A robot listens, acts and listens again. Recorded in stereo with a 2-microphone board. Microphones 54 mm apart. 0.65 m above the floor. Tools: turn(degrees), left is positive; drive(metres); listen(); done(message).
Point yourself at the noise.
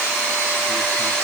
listen()
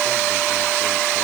listen()
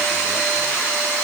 done("I can't make out anything.")